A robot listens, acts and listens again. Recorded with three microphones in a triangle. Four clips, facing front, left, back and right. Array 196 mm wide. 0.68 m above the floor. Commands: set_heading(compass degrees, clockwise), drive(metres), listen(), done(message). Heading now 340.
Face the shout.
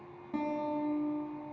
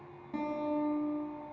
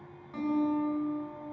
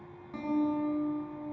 listen()
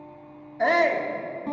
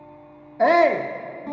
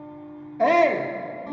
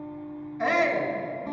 set_heading(225)
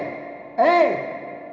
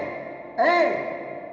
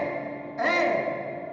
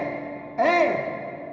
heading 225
set_heading(215)
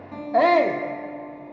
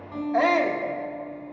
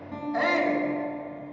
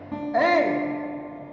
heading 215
done("Facing the shout, 1 to 2 m away.")